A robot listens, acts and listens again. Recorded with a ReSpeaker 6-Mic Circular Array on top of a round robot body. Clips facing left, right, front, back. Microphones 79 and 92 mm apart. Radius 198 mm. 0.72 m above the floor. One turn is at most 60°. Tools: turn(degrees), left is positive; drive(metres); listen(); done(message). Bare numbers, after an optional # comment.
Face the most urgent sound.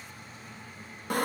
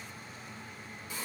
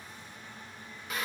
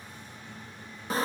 listen()
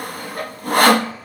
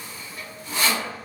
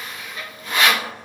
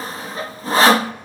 listen()
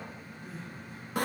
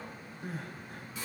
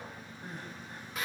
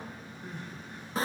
# The crying: 50° right.
turn(-50)
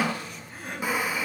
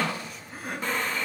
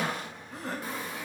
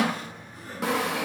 done("Found it: crying, straight ahead, over 4 m away.")